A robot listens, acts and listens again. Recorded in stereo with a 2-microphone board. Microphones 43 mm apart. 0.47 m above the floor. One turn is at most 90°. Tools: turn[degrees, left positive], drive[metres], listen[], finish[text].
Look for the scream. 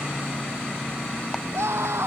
Action: turn[-90]
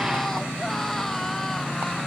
Action: listen[]
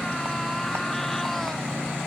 Action: listen[]
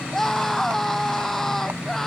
Thought: The scream is now 10° left.
Action: turn[10]
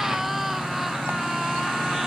Action: finish[Found it: a scream, straight ahead.]